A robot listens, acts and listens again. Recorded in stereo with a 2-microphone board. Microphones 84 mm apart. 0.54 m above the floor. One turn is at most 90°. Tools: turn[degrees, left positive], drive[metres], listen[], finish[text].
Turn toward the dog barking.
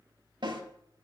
Action: listen[]
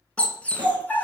Thought: The dog barking: about 20° left or 160° left.
Action: turn[20]
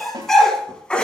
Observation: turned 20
Action: turn[30]
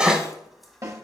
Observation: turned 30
Thought: So it is at 10° right.
Action: turn[-10]
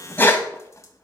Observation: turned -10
Thought: The dog barking is now 25° left.
Action: turn[25]
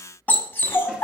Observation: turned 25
Thought: The dog barking is now 30° left.
Action: turn[30]
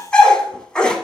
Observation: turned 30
Thought: The dog barking is now 10° left.
Action: turn[10]
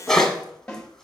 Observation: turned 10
Action: finish[Facing the dog barking.]